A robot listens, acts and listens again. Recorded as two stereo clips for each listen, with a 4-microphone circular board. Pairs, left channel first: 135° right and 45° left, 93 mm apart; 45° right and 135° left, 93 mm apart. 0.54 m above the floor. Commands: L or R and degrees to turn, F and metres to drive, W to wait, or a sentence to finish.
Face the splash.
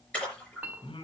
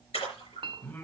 R60
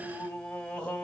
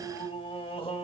Facing where the splash came from. I can't hear it now.